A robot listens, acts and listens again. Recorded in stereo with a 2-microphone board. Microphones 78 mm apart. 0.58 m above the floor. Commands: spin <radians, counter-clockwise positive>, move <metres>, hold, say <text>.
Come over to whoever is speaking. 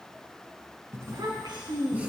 spin -1.22
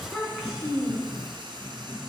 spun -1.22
move 1.0
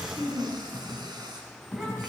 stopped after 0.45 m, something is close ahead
say Something is in my way. I am facing the child speaking but have not reached it.